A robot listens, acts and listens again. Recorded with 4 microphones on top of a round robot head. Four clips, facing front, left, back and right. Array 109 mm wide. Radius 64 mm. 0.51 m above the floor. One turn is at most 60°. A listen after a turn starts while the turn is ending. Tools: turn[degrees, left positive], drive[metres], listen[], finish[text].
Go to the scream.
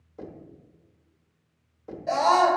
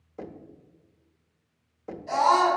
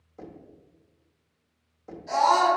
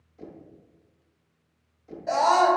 Thought: The scream: 55° right.
Action: turn[-55]
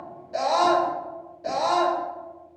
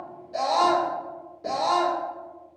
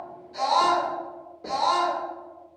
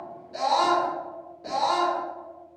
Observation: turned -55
Thought: The scream is now 10° left.
Action: turn[10]
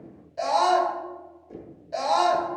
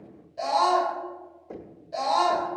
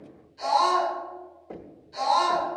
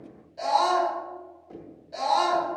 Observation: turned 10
Action: drive[1.0]
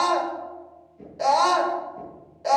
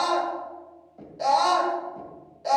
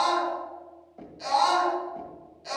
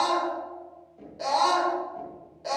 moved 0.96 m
Action: drive[1.0]
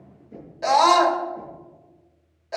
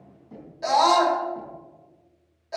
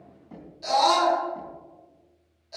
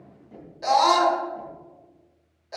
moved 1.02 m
Action: drive[1.0]
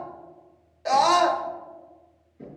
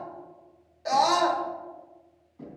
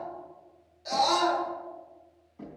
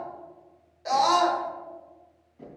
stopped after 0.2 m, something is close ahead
Action: finish[Arrived at the scream, straight ahead.]